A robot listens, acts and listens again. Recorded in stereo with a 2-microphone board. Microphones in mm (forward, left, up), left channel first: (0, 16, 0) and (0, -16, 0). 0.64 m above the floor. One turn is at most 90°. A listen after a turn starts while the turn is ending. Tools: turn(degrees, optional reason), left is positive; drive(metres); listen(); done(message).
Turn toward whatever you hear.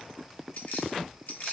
turn(degrees=75, reason="The keys jangling: about 75° left or 105° left.")
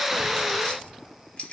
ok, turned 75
turn(degrees=45, reason="So it is at 45° left.")
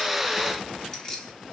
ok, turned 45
turn(degrees=20, reason="The keys jangling is now 20° left.")
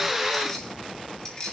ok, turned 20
turn(degrees=25, reason="The keys jangling is now 25° left.")
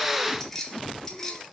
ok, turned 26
turn(degrees=15, reason="The keys jangling is now 15° left.")
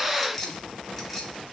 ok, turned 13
done("Facing the keys jangling.")